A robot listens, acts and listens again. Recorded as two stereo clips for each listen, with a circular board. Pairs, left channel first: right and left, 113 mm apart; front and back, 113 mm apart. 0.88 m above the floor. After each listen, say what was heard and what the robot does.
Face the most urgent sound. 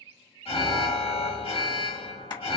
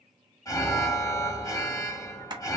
The alarm: 60° right. Turn 60° right.
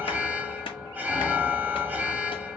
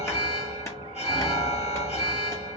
The alarm is now 15° left. Turn 15° left.
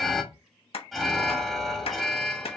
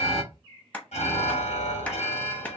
Found it: an alarm, straight ahead, 1 to 2 m away.